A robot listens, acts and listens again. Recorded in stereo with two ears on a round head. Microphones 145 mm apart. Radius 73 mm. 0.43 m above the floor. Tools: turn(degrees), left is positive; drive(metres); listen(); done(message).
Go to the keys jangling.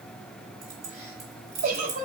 turn(degrees=-40)
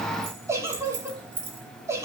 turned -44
turn(degrees=-100)
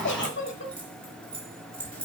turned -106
drive(metres=1.0)
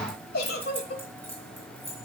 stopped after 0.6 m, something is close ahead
turn(degrees=10)
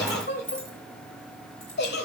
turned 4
done("Something is in my way. I am facing the keys jangling but have not reached it.")